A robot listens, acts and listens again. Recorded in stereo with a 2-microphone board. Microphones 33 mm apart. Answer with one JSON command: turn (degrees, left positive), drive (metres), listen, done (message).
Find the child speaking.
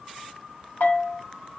{"listen": true}
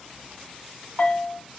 {"listen": true}
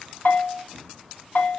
{"done": "I can't make out a child speaking to turn to."}